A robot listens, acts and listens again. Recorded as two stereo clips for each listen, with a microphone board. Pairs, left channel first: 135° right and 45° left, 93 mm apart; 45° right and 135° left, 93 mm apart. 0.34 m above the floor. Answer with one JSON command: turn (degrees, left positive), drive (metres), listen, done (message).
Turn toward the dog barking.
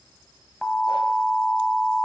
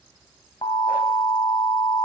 {"listen": true}
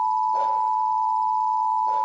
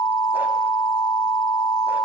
{"listen": true}
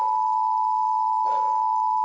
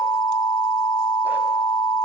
{"done": "I can't make out a dog barking, only an alarm."}